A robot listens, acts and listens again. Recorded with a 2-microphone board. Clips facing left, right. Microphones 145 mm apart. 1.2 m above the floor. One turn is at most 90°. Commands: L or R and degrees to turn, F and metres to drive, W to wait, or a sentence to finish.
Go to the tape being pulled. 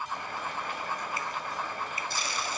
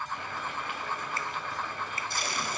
R55
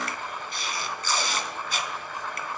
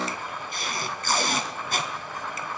R60
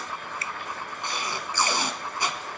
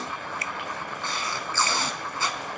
L15
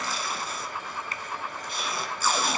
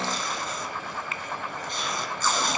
F1.0
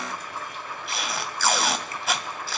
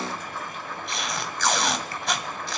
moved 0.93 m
F1.0
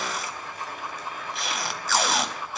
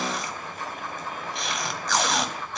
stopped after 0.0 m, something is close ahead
Arrived at the tape being pulled, straight ahead.